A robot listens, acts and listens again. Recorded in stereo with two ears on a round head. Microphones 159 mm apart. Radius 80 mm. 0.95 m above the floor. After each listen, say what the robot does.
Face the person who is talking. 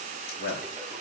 Turn 75° left.
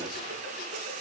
Keep listening.
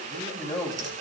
Turn 25° left.
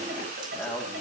Found it: a man speaking, straight ahead.